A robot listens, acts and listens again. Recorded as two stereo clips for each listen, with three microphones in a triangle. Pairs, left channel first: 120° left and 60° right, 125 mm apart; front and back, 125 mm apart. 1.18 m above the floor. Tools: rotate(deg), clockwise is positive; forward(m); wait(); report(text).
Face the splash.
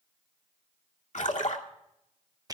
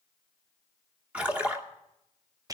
rotate(-100)
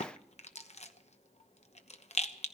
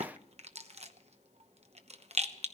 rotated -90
rotate(-10)
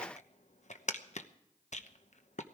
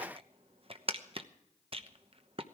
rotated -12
report("Facing where the splash came from. I can't hear it now.")